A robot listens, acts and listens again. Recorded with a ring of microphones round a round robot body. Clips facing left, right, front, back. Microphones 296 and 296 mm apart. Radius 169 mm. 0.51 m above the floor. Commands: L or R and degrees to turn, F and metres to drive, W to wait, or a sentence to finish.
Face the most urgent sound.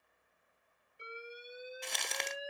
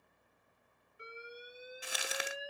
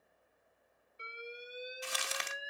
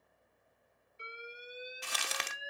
Found it: an alarm, straight ahead.